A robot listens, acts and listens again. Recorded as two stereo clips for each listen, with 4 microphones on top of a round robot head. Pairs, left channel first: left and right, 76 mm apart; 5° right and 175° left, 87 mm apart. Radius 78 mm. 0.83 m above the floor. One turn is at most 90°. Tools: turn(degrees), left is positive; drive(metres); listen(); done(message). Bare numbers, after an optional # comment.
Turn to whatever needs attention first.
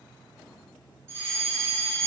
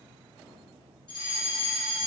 # The fire alarm: 35° right.
turn(-35)
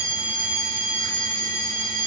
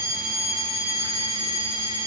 # The fire alarm is now 20° left.
turn(20)
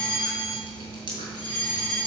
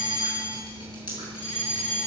done("Facing the fire alarm, over 4 m away.")